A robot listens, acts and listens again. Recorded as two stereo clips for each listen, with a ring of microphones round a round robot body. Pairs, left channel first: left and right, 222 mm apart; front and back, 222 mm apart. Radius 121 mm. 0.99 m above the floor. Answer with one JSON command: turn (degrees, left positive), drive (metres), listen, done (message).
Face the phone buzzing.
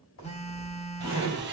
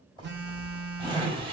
{"turn": 150}
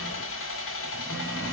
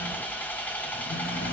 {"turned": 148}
{"listen": true}
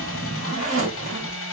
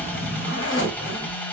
{"listen": true}
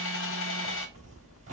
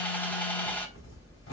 {"done": "I heard a phone buzzing from this way, but can't make it out now."}